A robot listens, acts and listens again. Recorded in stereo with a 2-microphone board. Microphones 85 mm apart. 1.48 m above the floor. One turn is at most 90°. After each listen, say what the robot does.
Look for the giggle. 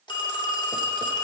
Keep listening.
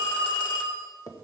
Keep listening.
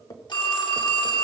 I can't make out a giggle to turn to.